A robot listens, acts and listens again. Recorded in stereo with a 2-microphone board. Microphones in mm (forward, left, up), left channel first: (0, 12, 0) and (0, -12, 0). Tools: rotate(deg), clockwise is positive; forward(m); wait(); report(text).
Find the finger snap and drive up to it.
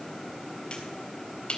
rotate(-45)
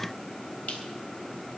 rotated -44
wait()
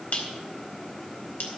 rotate(-90)
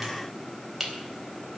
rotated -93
forward(1.0)
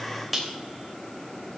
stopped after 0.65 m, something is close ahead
report("Something is in my way. I am facing the finger snap but have not reached it.")